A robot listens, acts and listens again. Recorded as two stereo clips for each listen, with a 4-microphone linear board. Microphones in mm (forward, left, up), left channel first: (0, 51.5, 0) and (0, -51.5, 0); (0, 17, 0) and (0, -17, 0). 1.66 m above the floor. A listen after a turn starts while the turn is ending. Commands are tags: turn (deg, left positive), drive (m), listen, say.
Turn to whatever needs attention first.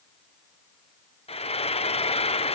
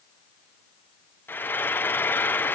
<listen/>
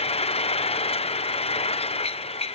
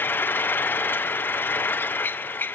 <listen/>
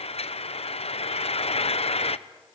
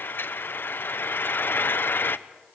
<say>I can't make out anything urgent, only frying.</say>